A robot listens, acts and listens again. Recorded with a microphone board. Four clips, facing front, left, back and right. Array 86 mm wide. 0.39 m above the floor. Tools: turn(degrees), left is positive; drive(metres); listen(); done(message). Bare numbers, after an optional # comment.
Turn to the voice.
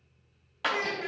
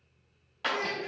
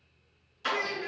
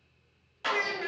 # The child speaking: 70° right.
turn(-70)
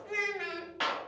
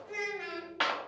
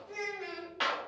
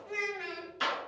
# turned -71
done("Found it: a child speaking, straight ahead.")